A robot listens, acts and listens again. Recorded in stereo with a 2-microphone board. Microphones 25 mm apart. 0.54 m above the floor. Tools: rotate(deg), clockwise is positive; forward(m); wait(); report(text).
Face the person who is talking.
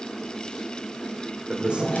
rotate(45)
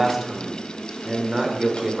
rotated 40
rotate(15)
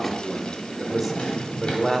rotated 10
report("Found it: a man speaking, straight ahead, 1 to 2 m away.")